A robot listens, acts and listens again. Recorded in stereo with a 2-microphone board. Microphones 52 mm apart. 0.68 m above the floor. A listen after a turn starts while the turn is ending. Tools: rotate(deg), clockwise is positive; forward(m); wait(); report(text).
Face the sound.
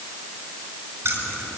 rotate(45)
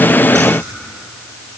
rotate(95)
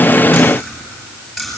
report("Found it: keys jangling, straight ahead.")